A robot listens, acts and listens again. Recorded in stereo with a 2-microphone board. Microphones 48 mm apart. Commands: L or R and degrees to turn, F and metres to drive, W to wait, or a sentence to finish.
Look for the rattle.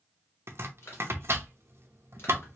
W
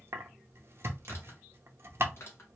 W
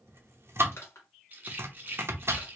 R40
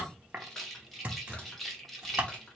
Found it: a rattle, straight ahead.